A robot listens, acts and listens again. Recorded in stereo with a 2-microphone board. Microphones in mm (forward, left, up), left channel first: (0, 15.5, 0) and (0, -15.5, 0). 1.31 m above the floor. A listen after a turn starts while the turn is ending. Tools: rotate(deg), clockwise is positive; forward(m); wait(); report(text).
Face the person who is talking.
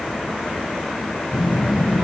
rotate(15)
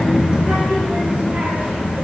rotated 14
rotate(125)
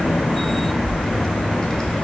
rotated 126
rotate(-25)
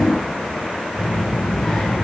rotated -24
rotate(-15)
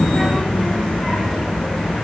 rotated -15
report("Facing the child speaking, 2 to 4 m away.")